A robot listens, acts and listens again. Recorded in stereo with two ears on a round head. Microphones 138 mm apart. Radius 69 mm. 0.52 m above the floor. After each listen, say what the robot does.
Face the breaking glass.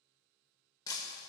Turn 25° left.
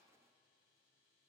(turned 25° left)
Keep listening.
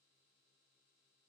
I heard breaking glass, but can't make it out now. It was about straight ahead or 130° left.